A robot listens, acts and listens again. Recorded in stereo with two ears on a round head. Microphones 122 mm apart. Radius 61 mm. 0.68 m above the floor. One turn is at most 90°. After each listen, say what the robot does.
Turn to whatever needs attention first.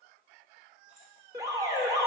Turn 30° right.
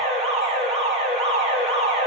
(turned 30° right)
Turn 90° right.
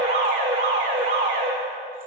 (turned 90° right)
Turn 45° right.
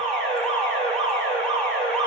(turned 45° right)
Turn 10° left.
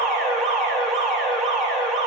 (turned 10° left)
Facing the alarm.